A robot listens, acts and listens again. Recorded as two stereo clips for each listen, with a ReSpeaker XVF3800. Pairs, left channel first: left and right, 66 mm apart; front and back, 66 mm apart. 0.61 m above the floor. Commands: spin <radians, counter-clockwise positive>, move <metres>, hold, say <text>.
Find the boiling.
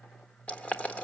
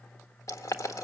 spin 0.44
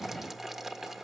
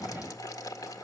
say Found it: boiling, straight ahead.